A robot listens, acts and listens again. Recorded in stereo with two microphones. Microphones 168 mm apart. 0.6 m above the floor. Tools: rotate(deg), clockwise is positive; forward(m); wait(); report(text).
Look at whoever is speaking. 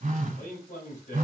rotate(-50)
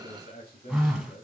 rotate(-75)
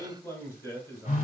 rotate(-15)
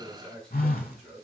report("Facing the man speaking, 2 to 4 m away.")